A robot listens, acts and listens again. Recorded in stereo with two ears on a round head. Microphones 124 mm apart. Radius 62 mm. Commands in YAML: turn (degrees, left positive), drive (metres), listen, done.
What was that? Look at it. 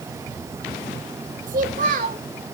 turn: -60
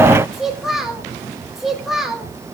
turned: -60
done: "Found it: a child speaking, straight ahead."